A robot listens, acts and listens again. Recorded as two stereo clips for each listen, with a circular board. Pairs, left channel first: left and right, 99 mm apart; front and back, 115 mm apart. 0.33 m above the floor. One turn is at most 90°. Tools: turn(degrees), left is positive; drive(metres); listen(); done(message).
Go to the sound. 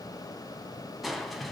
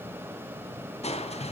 drive(metres=1.0)
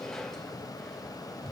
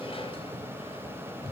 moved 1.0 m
drive(metres=1.0)
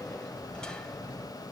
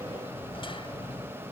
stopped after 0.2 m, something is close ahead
turn(degrees=10)
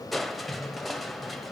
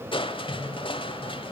done("I am next to the crushing.")